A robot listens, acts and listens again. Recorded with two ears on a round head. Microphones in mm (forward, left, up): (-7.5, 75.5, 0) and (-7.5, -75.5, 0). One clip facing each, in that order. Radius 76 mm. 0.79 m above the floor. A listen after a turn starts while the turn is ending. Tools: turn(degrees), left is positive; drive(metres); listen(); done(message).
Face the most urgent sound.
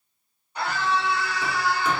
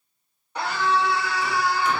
turn(degrees=-55)
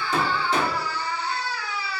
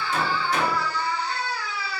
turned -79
done("Facing the scream, 2 to 4 m away.")